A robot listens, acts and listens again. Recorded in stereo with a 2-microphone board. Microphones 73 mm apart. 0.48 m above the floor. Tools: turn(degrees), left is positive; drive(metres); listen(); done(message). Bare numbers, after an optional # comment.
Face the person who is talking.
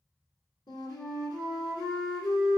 listen()
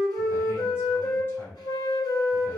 # The man speaking: about 35° left or 145° left.
turn(35)
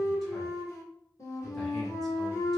listen()
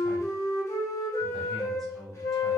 done("Found it: a man speaking, straight ahead, 1 to 2 m away.")